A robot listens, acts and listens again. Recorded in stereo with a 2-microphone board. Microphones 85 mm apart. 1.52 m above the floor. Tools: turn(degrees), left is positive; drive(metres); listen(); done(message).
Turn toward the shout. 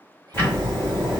listen()
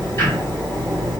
listen()
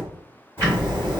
done("I can't make out a shout to turn to.")